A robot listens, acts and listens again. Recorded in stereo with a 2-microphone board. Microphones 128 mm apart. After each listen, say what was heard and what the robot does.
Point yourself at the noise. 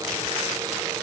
Keep listening.
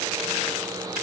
Keep listening.
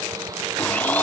Turn 30° left.
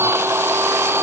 So it is at 20° right. Turn 20° right.
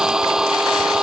Facing the blender.